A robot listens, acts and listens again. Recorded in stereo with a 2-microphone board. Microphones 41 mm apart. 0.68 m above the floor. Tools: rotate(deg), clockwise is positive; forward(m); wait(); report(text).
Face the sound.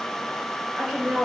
rotate(-30)
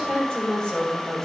rotate(-155)
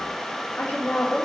rotate(-30)
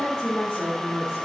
rotate(-25)
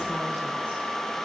wait()
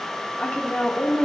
rotate(-20)
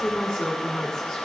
report("Found it: a woman speaking, straight ahead, 1 to 2 m away.")